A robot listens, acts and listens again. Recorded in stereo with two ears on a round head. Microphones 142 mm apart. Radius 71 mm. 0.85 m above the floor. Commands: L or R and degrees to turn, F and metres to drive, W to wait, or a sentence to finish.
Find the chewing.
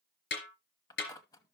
L25
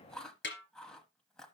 Found it: chewing, straight ahead.